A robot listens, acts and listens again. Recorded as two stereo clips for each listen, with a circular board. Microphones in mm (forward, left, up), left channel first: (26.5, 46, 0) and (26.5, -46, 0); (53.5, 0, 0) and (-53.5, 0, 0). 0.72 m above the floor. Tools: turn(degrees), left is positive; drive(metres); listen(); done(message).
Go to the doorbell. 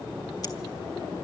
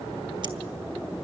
listen()
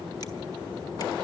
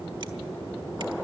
listen()
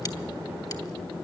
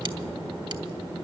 done("I can't make out a doorbell to turn to.")